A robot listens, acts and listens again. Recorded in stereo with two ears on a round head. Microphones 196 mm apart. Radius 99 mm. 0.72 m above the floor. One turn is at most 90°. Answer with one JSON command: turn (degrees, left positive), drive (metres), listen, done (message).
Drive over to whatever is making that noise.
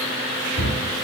{"turn": 30}
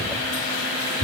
{"turn": -25}
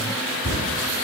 {"turn": 10}
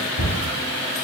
{"drive": 1.0}
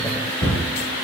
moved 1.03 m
{"drive": 1.0}
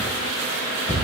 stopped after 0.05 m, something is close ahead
{"done": "Arrived at the cupboard door, straight ahead."}